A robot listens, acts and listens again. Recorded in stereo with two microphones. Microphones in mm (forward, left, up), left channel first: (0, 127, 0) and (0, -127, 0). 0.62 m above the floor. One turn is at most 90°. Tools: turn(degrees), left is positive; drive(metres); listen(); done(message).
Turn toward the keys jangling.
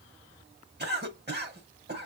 listen()
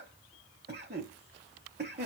listen()
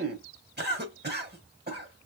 done("I can't make out keys jangling to turn to.")